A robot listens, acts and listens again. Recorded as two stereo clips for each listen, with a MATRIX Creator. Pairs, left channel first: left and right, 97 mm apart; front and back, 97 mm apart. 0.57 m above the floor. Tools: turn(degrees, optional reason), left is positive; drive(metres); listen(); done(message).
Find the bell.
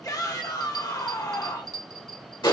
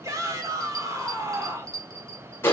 turn(degrees=-130, reason="The bell: 130° right.")
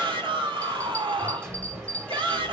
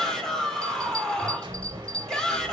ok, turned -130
turn(degrees=15, reason="The bell is now 15° left.")
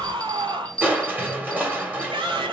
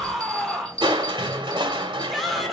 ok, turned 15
turn(degrees=10, reason="The bell is now 10° left.")
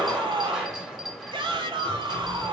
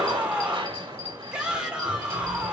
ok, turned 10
listen()
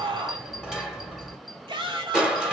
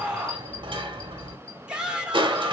listen()
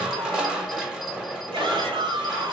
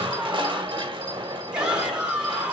done("I heard a bell from this way, but can't make it out now.")